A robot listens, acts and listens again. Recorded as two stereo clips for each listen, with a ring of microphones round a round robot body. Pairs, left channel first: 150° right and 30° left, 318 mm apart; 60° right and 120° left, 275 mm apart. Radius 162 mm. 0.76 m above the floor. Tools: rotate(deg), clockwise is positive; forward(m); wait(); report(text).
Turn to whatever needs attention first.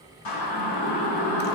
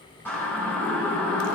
rotate(145)
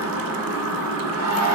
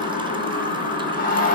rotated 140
report("Found it: a siren, straight ahead.")